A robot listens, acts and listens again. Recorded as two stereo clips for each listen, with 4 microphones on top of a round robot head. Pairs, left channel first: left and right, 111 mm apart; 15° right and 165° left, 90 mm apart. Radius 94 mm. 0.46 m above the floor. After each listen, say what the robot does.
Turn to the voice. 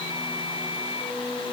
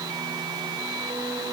Keep listening.
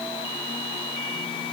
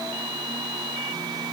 Keep listening.
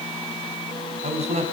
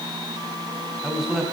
Turn 105° right.
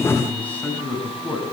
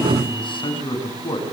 Turn 10° left.
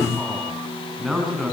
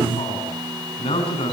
Found it: a man speaking, straight ahead.